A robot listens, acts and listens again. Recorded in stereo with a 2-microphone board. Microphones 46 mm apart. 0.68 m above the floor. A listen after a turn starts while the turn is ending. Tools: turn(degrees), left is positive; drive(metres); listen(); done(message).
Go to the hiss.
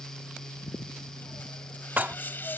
turn(degrees=45)
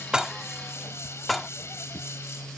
turn(degrees=85)
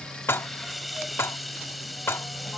drive(metres=1.0)
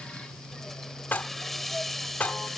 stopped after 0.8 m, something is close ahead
done("Blocked. The hiss is further on, straight ahead.")